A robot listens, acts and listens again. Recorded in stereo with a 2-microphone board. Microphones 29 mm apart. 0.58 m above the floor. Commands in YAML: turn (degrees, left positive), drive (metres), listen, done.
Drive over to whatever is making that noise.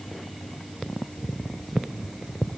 listen: true
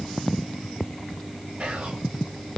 turn: -70
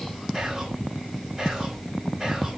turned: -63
turn: -20
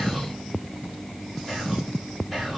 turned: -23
drive: 1.0
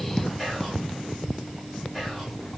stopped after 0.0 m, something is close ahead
done: "Blocked. The whispering is further on, straight ahead."